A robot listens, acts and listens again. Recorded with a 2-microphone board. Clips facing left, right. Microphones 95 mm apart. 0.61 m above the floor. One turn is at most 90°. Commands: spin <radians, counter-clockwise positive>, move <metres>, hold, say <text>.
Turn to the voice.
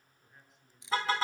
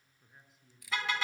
spin 0.52
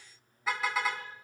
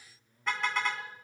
spin -0.52
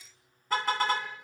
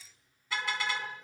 hold
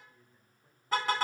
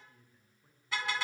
say Found it: a man speaking, straight ahead.